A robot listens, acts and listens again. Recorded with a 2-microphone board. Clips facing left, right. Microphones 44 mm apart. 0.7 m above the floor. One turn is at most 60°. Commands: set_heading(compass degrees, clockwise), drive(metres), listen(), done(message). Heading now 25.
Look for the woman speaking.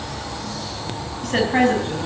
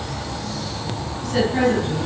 set_heading(335)
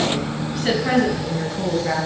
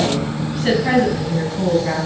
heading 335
set_heading(345)
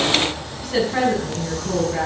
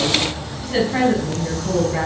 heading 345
set_heading(355)
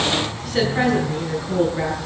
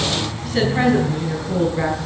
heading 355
done("Found it: a woman speaking, straight ahead.")